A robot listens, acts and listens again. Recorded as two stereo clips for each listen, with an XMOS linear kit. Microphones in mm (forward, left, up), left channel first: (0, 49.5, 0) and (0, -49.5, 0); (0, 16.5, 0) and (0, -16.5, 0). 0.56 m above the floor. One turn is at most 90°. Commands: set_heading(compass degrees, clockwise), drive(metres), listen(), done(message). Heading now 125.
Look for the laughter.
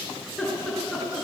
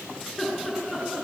set_heading(95)
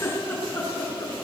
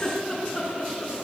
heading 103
set_heading(13)
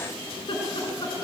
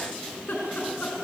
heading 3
set_heading(303)
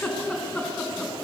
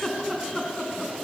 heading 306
set_heading(296)
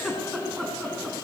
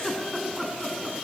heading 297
done("Facing the laughter, over 4 m away.")